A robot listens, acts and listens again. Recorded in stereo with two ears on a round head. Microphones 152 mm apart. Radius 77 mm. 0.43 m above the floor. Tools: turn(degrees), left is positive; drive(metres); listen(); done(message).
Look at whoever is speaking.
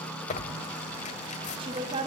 turn(degrees=-30)
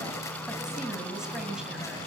done("Facing the woman speaking.")